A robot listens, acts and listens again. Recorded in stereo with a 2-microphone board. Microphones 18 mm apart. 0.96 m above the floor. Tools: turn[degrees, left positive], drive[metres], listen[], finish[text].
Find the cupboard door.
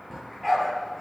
Action: listen[]
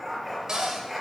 Thought: The cupboard door: about 40° right or 140° right.
Action: turn[-40]
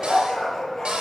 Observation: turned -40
Thought: So it is at 95° right.
Action: turn[-95]
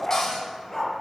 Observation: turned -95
Action: listen[]
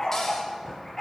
Action: listen[]
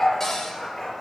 Thought: The cupboard door is now 25° left.
Action: turn[25]
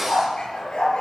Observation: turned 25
Action: listen[]
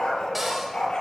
Thought: The cupboard door is now 10° right.
Action: turn[-10]
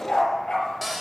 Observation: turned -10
Action: finish[Found it: a cupboard door, straight ahead, 2 to 4 m away.]